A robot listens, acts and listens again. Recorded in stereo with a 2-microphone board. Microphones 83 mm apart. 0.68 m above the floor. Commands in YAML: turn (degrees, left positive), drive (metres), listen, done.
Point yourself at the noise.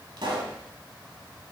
turn: -75
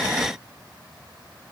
listen: true
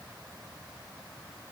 done: "I heard a pop, but can't make it out now. It was about straight ahead or 30° right."